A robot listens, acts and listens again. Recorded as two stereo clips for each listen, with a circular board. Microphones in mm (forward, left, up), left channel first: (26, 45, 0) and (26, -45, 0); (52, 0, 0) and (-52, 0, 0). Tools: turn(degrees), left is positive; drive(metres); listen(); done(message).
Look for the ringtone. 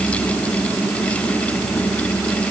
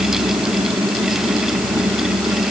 listen()
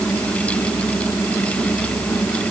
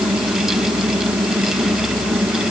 listen()
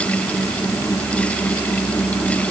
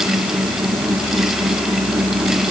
done("I can't make out a ringtone to turn to.")